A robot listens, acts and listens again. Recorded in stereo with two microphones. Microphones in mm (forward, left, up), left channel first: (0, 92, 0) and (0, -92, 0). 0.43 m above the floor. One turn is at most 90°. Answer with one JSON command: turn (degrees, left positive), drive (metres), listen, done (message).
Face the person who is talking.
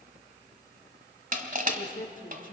{"turn": 50}
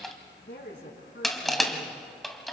{"turn": 80}
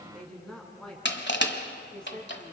{"done": "Found it: a woman speaking, straight ahead, over 4 m away."}